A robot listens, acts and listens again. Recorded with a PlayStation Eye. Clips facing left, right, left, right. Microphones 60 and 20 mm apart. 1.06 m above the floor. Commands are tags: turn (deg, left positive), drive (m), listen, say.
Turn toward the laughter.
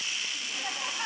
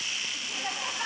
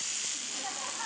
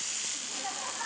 <turn deg="30"/>
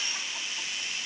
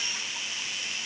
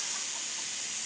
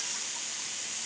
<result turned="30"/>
<listen/>
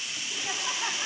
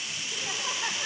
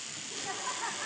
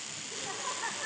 <turn deg="135"/>
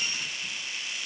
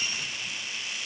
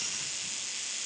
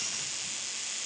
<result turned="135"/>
<listen/>
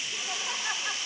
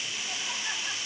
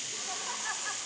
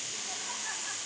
<turn deg="45"/>
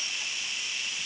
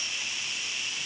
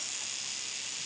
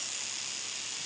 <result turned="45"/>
<listen/>
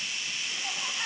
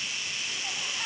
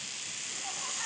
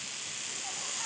<listen/>
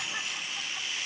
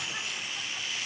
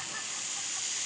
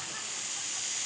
<say>Facing where the laughter came from. I can't hear it now.</say>